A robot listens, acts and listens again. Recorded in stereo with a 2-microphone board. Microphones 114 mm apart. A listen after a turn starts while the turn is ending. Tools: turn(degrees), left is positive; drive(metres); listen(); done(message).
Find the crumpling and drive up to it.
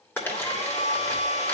turn(degrees=20)
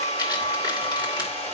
turn(degrees=140)
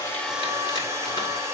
listen()
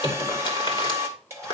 turn(degrees=45)
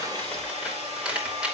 turn(degrees=-10)
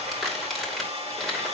drive(metres=1.0)
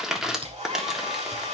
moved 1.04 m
drive(metres=1.0)
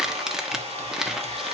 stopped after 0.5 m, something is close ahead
done("I am next to the crumpling.")